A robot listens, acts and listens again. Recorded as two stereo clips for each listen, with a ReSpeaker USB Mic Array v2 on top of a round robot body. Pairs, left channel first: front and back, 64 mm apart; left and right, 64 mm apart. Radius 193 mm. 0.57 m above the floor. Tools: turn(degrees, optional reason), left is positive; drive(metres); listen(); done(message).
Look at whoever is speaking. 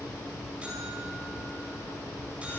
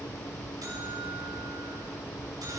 listen()
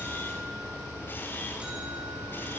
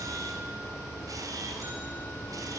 listen()
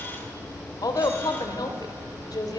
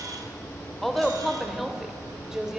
turn(degrees=-10, reason="The woman speaking: 10° right.")
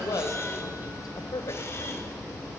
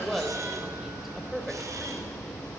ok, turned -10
done("Found it: a woman speaking, straight ahead.")